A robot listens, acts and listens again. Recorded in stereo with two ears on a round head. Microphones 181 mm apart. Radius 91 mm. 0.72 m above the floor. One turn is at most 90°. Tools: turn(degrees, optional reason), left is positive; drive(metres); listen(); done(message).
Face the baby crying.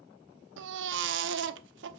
turn(degrees=-65, reason="The baby crying: about 65° right or 115° right.")
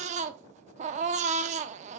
turn(degrees=-40, reason="So it is at 40° right.")
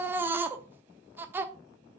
turn(degrees=-10, reason="The baby crying is now 10° right.")
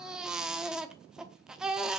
done("Found it: a baby crying, straight ahead, under 1 m away.")